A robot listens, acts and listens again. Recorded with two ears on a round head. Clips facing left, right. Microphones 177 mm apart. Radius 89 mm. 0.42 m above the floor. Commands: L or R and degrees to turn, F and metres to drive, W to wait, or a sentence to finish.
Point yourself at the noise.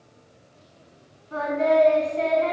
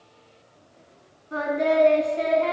R30
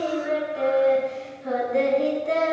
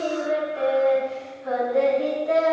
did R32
L40
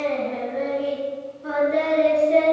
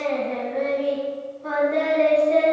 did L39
L20
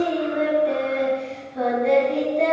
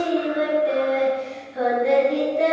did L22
Found it: singing, straight ahead.